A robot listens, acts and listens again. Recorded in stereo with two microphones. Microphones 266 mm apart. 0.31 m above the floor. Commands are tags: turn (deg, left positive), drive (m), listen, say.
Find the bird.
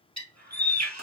<turn deg="-90"/>
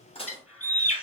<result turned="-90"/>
<say>Found it: a bird, straight ahead.</say>